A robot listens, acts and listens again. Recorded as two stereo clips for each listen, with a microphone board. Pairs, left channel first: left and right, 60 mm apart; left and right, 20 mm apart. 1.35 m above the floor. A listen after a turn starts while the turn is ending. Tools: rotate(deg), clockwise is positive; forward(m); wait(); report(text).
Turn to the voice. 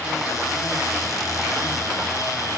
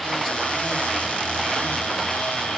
wait()
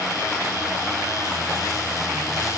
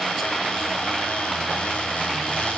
wait()
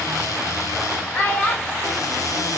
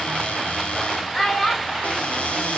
rotate(-25)
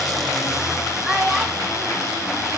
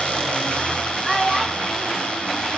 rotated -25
report("Found it: a child speaking, straight ahead.")